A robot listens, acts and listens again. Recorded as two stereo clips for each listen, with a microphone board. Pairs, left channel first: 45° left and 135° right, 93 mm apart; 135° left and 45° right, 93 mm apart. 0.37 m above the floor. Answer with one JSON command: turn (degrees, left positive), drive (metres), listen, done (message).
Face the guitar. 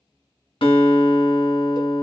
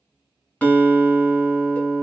{"turn": 60}
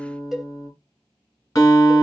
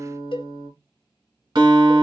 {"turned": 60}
{"turn": -10}
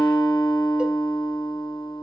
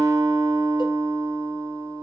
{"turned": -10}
{"done": "Found it: a guitar, straight ahead, 1 to 2 m away."}